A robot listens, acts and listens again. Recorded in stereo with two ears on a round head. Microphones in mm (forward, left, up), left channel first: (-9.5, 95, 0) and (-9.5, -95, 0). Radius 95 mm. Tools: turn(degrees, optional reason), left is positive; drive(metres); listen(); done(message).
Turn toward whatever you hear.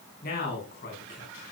turn(degrees=50, reason="The man speaking: about 50° left or 130° left.")
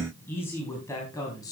turn(degrees=15, reason="So it is at 15° left.")
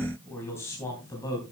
turn(degrees=20, reason="The man speaking is now 20° left.")
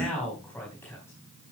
turn(degrees=10, reason="The man speaking is now 10° left.")
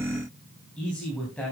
done("Found it: a man speaking, straight ahead, 2 to 4 m away.")